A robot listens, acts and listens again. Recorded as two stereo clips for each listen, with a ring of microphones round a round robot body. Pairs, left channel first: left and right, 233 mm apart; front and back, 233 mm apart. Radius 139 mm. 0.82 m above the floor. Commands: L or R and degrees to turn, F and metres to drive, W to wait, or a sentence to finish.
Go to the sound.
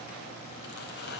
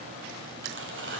L145
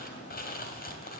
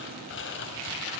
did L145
L40
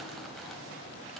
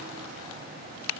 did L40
W
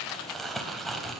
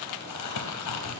F1.0
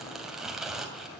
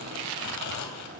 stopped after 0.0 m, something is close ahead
Blocked. The crumpling is further on, straight ahead.